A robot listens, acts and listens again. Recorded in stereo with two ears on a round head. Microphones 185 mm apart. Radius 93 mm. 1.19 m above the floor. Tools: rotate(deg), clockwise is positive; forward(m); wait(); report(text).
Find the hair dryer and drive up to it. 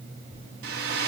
rotate(55)
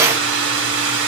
rotate(70)
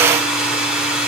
forward(1.0)
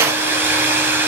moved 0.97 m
rotate(10)
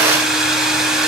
forward(1.0)
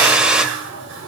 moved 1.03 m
forward(1.0)
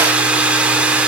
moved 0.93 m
rotate(10)
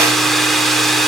forward(1.0)
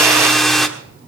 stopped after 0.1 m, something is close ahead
report("I am next to the hair dryer.")